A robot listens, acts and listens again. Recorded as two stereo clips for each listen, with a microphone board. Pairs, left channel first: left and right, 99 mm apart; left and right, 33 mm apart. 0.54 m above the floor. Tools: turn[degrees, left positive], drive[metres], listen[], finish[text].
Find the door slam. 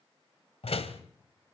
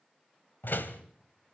Action: turn[90]
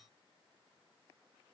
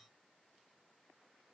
Action: finish[Facing where the door slam came from. I can't hear it now.]